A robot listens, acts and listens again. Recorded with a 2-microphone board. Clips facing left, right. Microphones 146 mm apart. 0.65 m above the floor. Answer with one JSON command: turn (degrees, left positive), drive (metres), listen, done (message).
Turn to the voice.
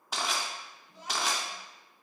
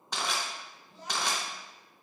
{"turn": 30}
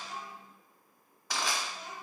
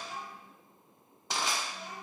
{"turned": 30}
{"turn": 135}
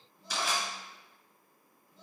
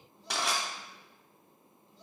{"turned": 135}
{"turn": 60}
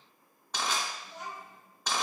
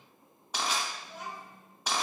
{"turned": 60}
{"turn": -10}
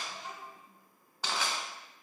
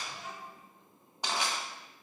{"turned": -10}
{"done": "Facing the child speaking, 1 to 2 m away."}